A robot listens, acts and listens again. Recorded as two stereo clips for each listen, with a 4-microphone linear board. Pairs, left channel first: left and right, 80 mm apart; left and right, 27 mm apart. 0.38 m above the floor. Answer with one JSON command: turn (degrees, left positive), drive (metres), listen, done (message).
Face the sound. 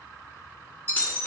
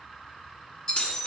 {"turn": 25}
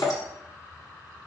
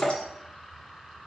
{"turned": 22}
{"turn": 135}
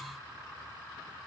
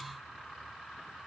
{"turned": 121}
{"turn": 10}
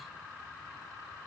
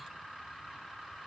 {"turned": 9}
{"done": "I heard breaking glass from this way, but can't make it out now."}